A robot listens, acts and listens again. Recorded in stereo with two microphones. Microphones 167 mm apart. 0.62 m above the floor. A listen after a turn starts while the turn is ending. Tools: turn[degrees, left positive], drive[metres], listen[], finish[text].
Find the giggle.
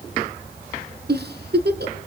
Action: turn[-90]
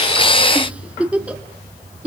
Thought: So it is at 10° right.
Action: turn[-10]
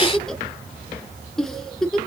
Action: finish[Found it: a giggle, straight ahead.]